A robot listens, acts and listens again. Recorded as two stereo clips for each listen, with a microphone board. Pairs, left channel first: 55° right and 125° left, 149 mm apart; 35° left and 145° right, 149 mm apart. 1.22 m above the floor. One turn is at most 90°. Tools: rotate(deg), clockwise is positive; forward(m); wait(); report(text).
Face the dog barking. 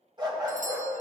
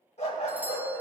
rotate(-65)
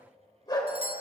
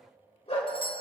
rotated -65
report("Found it: a dog barking, straight ahead.")